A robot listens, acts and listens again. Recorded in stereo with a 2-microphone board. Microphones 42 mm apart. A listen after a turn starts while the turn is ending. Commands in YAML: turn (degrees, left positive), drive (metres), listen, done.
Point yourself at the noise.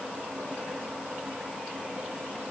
listen: true
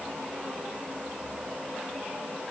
listen: true
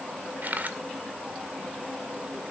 turn: -45
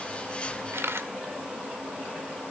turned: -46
turn: -90
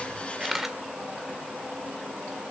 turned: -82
done: "Found it: a camera shutter, straight ahead, 1 to 2 m away."